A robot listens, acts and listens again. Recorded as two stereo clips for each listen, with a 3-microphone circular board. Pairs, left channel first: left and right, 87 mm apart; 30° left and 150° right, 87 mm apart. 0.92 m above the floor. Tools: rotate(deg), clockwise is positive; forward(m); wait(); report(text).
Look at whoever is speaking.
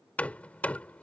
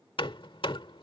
wait()
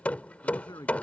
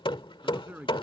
rotate(-135)
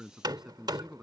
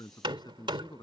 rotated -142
report("Facing the man speaking.")